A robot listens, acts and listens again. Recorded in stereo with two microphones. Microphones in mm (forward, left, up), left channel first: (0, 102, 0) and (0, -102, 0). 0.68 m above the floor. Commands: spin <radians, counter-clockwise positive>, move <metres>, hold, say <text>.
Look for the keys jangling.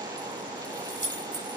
spin -0.96
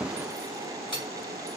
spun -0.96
spin -1.22
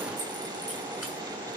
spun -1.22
hold
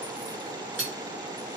spin -0.17
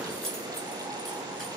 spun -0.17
say Found it: keys jangling, straight ahead, 2 to 4 m away.